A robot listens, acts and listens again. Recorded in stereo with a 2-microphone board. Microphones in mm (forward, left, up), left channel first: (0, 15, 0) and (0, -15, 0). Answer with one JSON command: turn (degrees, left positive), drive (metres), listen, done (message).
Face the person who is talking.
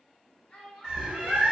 {"turn": 40}
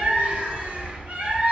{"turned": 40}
{"listen": true}
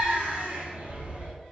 {"listen": true}
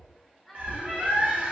{"turn": 10}
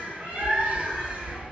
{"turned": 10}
{"listen": true}
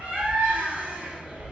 {"listen": true}
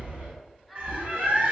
{"done": "Facing the child speaking."}